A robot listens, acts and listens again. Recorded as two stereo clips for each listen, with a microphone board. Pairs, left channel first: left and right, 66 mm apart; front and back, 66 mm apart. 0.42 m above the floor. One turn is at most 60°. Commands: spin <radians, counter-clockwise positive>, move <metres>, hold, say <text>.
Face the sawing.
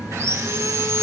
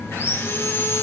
spin -0.87
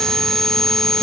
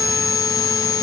say Facing the sawing.